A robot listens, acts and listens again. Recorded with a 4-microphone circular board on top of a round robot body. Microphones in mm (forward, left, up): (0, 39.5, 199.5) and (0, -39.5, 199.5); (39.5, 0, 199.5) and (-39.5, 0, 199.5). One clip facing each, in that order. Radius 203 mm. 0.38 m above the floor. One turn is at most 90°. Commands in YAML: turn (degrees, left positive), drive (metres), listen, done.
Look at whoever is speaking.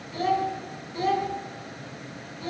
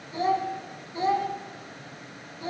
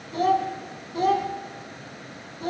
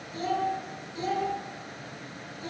turn: -25
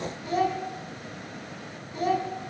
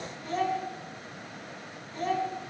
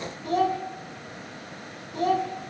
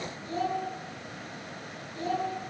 done: "Facing the child speaking, 2 to 4 m away."